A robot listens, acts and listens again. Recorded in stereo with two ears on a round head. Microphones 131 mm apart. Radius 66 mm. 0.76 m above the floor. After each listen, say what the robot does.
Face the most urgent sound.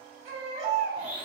Turn 45° right.
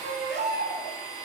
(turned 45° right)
Turn 90° right.
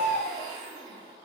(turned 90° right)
Found it: a baby crying, straight ahead.